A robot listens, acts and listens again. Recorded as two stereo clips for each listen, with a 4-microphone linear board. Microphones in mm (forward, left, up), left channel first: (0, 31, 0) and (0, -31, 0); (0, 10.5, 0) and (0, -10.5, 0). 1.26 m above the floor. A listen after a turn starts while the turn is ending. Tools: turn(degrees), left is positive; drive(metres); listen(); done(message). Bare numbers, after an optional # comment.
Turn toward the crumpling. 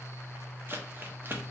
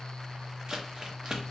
# The crumpling: about 35° right or 145° right.
turn(-35)
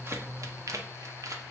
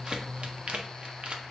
# So it is at 110° right.
turn(-110)
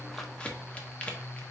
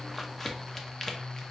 # The crumpling is now 20° left.
turn(20)
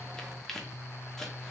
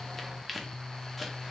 done("Found it: crumpling, straight ahead.")